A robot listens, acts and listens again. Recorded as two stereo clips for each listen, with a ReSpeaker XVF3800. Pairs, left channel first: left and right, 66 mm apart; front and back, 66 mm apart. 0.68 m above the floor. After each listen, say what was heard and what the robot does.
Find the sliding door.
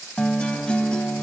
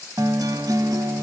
Keep listening.
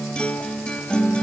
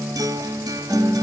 Keep listening.
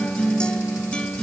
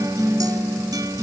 I can't make out a sliding door to turn to.